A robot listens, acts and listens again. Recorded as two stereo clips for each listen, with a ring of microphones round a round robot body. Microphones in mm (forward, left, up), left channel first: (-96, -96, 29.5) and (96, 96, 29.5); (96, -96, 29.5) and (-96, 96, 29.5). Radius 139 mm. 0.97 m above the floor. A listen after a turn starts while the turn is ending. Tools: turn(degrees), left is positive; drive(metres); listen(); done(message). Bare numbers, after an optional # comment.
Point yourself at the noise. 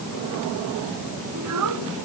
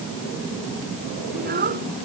# The child speaking: 75° left.
turn(75)
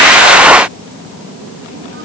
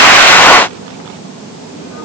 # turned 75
listen()
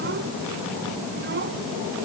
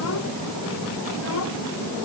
listen()
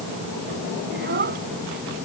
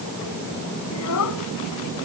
# The child speaking is now 10° right.
turn(-10)
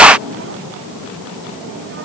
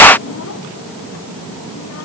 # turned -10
listen()
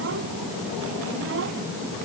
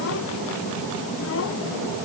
listen()
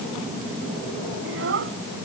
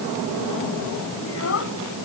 done("Found it: a child speaking, straight ahead.")